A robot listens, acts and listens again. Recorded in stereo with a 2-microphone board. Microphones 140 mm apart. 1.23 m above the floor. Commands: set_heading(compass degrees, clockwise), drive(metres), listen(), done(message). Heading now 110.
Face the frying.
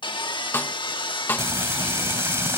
set_heading(130)
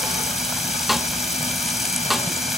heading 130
done("Facing the frying.")